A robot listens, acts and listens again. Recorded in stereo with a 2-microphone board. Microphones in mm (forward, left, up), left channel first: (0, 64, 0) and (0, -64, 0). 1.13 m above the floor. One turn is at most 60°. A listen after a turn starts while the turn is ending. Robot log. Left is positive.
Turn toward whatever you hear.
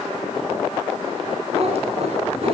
note: The cat meowing: about 55° right or 125° right.
cmd yaw -55
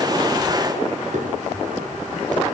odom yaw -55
note: So it is at 75° right.
cmd yaw -60
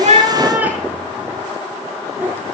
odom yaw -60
note: The cat meowing is now 15° right.
cmd yaw -15
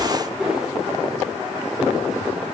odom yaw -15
end: Facing the cat meowing.